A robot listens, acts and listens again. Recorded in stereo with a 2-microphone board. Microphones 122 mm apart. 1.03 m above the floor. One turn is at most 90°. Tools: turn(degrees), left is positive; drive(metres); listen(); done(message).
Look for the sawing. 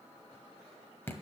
listen()
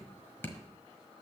listen()
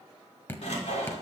turn(degrees=70)
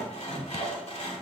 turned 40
turn(degrees=70)
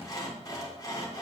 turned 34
turn(degrees=35)
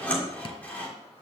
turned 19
turn(degrees=15)
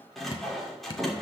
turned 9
done("Found it: sawing, straight ahead, 2 to 4 m away.")